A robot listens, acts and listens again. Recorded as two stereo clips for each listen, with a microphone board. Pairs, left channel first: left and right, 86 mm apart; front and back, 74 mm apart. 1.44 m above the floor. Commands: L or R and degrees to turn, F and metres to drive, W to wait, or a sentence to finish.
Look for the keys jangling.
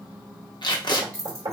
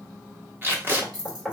L170
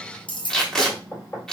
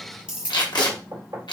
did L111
L110
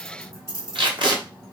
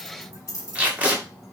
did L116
L40
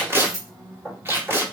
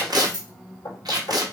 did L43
Facing the keys jangling.